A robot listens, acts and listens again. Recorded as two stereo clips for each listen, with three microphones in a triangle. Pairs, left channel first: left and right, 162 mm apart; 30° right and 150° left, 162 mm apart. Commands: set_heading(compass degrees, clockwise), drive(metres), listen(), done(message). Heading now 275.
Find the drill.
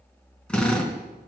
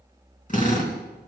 done("Found it: a drill, straight ahead, over 4 m away.")